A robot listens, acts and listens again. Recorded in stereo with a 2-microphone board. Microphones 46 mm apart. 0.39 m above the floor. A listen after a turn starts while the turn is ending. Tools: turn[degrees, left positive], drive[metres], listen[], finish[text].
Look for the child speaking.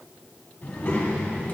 Thought: The child speaking: about 30° left or 150° left.
Action: turn[30]
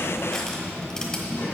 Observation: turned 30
Thought: So it is at 130° left.
Action: turn[130]
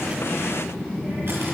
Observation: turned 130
Thought: The child speaking is now 20° left.
Action: turn[20]
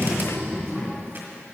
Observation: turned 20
Action: finish[Facing the child speaking, over 4 m away.]